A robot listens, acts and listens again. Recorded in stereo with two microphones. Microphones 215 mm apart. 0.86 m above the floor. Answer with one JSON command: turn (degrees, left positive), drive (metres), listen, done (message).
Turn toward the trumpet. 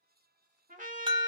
{"turn": -40}
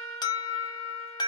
{"listen": true}
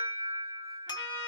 {"listen": true}
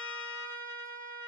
{"turn": -95}
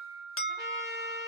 {"turn": -15}
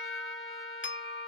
{"done": "Facing the trumpet, 1 to 2 m away."}